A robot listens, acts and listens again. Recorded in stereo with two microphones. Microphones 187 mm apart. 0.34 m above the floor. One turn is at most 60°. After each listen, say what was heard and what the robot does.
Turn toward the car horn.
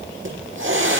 Keep listening.
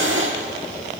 Keep listening.
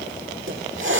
I can't make out a car horn, only a hiss.